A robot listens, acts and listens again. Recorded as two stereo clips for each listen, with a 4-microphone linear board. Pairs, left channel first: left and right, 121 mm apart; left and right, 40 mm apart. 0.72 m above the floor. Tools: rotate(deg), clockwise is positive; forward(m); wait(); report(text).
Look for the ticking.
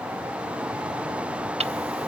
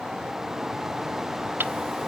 rotate(60)
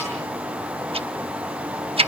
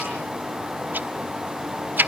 rotate(55)
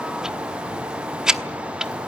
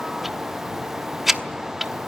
report("Facing the ticking, under 1 m away.")